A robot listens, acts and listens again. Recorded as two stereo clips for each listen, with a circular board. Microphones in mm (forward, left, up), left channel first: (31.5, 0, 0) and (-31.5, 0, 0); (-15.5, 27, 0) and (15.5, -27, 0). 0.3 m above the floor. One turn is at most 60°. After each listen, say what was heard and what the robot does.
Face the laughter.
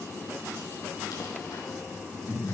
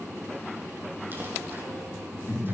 The laughter: 125° left. Turn 60° left.
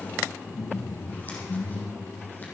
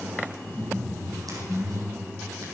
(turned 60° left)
The laughter is now 60° left. Turn 60° left.
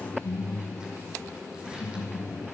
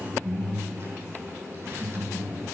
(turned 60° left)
Found it: laughter, straight ahead, over 4 m away.